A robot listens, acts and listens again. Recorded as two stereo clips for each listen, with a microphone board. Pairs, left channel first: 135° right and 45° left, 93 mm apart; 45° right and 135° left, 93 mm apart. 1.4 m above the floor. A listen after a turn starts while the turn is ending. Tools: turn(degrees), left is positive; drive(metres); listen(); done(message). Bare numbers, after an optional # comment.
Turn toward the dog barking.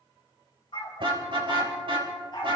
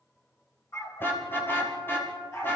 # The dog barking: 100° right.
turn(-100)
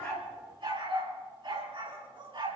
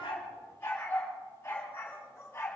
# The dog barking is now 25° left.
turn(25)
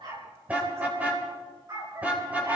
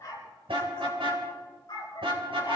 done("Facing the dog barking, over 4 m away.")